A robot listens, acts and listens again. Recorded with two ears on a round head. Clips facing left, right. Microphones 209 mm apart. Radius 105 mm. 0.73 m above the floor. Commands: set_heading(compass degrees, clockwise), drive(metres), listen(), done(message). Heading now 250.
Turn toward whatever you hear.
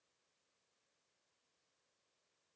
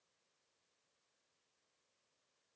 listen()
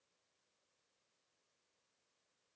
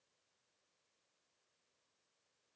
listen()
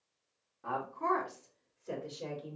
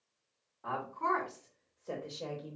set_heading(225)
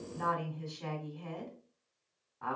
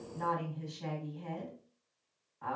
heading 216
set_heading(91)
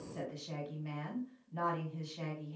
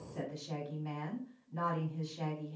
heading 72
set_heading(97)
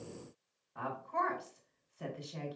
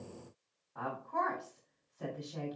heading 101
done("Facing the woman speaking.")